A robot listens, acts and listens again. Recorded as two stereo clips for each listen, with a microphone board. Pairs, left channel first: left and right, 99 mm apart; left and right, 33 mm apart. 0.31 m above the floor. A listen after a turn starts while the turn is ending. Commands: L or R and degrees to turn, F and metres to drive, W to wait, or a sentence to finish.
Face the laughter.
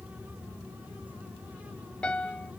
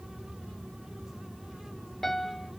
W
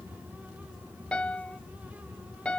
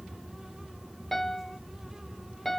W
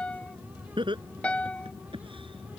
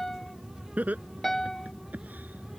R60
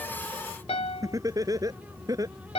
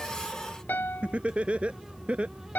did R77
R35
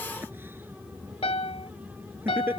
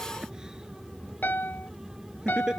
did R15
R20
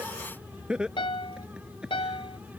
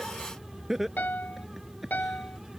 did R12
Facing the laughter.